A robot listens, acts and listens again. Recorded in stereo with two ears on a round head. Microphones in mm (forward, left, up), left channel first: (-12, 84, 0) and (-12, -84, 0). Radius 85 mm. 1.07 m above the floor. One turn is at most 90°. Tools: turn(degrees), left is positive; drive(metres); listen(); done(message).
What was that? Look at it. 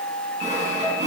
turn(degrees=-40)
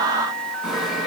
done("Found it: sawing, straight ahead.")